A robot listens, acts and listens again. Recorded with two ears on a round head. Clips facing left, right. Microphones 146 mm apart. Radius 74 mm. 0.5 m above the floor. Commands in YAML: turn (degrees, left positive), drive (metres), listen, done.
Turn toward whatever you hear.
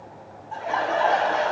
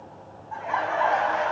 turn: 40
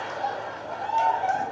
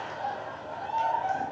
turn: 95
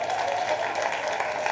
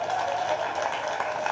turn: 15
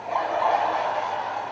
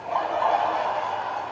done: "Found it: laughter, straight ahead."